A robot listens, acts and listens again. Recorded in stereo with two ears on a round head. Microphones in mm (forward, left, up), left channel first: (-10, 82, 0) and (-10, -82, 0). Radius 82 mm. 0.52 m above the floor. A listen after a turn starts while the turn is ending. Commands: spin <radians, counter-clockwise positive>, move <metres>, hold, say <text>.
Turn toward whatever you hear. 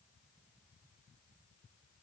hold
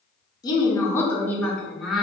spin -0.52
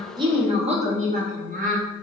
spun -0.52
spin -2.27
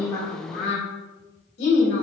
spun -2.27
spin 0.96
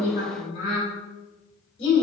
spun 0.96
spin 0.52
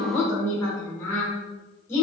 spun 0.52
spin 0.26
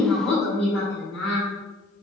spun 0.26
say Found it: a woman speaking, straight ahead.